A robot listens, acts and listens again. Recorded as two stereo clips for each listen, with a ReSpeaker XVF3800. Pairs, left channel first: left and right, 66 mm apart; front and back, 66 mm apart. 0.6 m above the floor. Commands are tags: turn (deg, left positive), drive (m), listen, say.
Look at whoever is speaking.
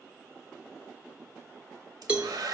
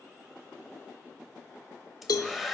<listen/>
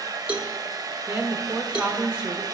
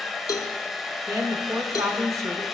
<turn deg="-160"/>
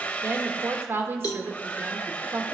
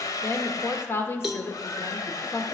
<turn deg="-45"/>
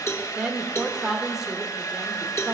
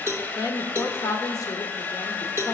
<turn deg="-10"/>
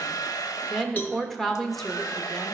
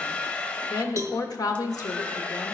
<say>Found it: a woman speaking, straight ahead.</say>